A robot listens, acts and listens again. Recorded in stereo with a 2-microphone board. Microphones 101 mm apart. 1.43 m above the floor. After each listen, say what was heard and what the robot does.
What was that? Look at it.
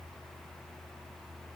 Keep listening.
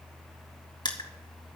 The crushing: about 45° left or 135° left. Turn 45° left.
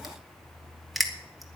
Facing the crushing, 1 to 2 m away.